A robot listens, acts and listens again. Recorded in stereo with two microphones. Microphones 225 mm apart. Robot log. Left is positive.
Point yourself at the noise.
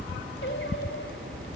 note: The singing: about 60° left or 120° left.
cmd yaw +60
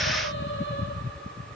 note: So it is at 60° left.
cmd yaw +60
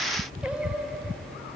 end: Facing the singing.